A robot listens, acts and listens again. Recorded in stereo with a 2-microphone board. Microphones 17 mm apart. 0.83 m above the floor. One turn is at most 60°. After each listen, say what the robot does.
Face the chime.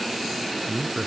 Keep listening.
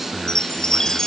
Turn 40° left.
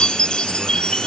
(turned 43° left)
Turn 60° left.
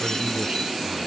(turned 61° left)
Turn 35° left.
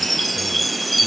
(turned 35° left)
Found it: a chime, straight ahead.